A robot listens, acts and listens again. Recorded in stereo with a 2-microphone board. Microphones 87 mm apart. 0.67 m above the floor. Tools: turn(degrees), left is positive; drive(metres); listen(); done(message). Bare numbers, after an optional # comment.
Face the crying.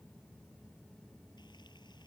listen()
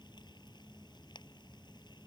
listen()
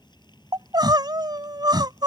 # The crying: about 55° right or 125° right.
turn(-55)
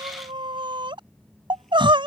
# So it is at 70° right.
turn(-70)
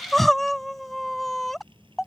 done("Facing the crying.")